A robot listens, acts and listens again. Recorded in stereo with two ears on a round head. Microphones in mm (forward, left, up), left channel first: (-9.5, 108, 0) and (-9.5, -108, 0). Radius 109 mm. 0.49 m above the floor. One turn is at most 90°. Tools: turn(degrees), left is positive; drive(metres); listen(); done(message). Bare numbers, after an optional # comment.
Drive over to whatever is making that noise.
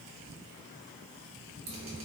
# The dripping: about 25° right or 155° right.
turn(-25)
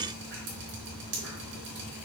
# So it is at 130° right.
turn(-90)
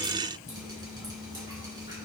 # The dripping is now 20° right.
turn(-20)
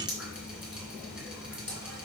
drive(1.0)
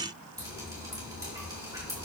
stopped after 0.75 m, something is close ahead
# The dripping is now 15° right.
turn(-15)
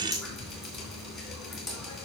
done("Blocked. The dripping is further on, straight ahead.")